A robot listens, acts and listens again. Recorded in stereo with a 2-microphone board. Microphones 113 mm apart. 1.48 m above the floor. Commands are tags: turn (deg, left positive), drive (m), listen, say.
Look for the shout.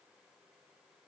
<listen/>
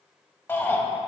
<turn deg="20"/>
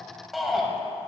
<say>Facing the shout, 1 to 2 m away.</say>